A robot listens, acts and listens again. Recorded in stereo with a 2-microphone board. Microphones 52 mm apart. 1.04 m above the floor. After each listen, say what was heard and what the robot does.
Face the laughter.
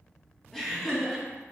Turn 30° left.
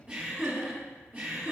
So it is at 35° right. Turn 35° right.
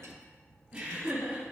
The laughter is now 25° right. Turn 25° right.
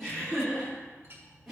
Facing the laughter.